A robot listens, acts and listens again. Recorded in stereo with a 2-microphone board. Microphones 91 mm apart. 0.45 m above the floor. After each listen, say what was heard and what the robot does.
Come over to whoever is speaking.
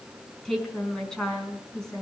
Turn 30° left.
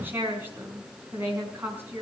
So it is at 25° right. Turn 25° right.
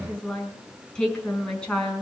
The woman speaking is now 10° left. Turn 10° left.
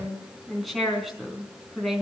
Drive 1.0 m forward.
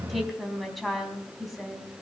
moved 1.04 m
Drive 1.0 m forward.
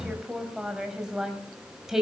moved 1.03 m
Drive 1.0 m forward.
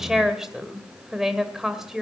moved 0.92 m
Drive 1.0 m forward.
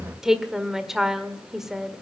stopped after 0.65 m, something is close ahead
Arrived at the woman speaking, straight ahead.